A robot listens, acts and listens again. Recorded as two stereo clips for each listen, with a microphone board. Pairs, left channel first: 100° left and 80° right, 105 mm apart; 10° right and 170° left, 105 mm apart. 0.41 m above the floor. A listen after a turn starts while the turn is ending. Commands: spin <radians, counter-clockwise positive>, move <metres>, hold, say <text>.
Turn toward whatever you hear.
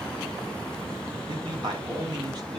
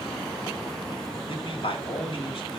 spin -0.61
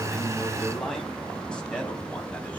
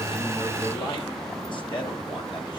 hold
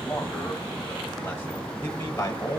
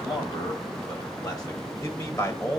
spin 0.79
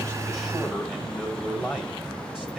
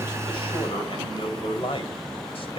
say Found it: a man speaking, straight ahead, 2 to 4 m away.